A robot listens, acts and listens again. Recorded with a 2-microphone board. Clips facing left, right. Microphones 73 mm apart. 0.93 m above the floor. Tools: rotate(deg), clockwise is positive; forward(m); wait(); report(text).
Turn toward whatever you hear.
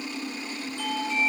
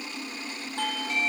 rotate(60)
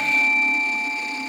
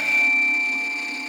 report("Facing the doorbell.")